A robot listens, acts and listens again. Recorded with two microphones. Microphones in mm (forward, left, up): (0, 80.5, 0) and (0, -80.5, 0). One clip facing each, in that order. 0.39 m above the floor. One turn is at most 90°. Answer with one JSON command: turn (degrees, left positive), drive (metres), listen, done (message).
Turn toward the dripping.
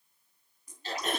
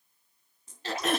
{"turn": -25}
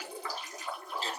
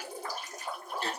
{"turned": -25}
{"turn": -90}
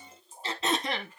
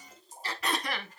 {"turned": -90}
{"turn": -40}
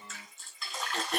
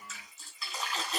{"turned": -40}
{"done": "Found it: dripping, straight ahead, 2 to 4 m away."}